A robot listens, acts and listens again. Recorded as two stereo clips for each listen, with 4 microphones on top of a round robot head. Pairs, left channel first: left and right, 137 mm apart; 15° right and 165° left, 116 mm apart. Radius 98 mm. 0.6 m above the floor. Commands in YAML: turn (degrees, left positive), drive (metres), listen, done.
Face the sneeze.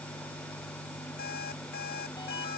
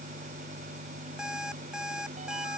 listen: true
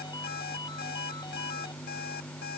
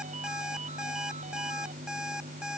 listen: true
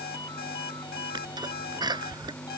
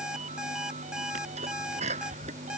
turn: -150
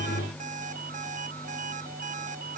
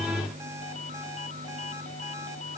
done: "Facing where the sneeze came from. I can't hear it now."